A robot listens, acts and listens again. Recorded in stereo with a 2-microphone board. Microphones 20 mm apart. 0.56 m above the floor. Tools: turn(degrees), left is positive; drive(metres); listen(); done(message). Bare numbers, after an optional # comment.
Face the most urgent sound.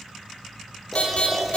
# The alarm: about 70° left or 110° left.
turn(70)
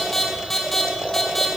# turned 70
# So it is at 10° left.
turn(10)
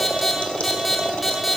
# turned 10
done("Found it: an alarm, straight ahead, 2 to 4 m away.")